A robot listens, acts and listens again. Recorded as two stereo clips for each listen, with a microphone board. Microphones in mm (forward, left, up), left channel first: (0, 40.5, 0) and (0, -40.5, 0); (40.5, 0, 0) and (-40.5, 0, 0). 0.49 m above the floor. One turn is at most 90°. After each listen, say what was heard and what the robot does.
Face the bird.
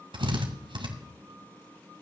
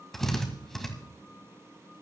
Keep listening.
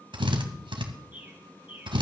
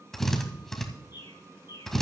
The bird: 20° right. Turn 20° right.
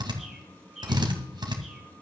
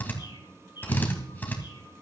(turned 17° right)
Facing the bird.